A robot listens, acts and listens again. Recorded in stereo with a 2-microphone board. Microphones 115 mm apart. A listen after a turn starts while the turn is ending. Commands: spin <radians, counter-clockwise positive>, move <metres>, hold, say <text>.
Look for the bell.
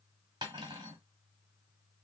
hold
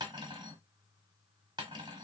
hold
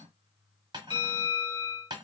spin 1.05
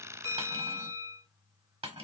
spin 0.44
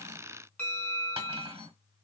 spin 0.26
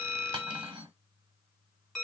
say Found it: a bell, straight ahead, 1 to 2 m away.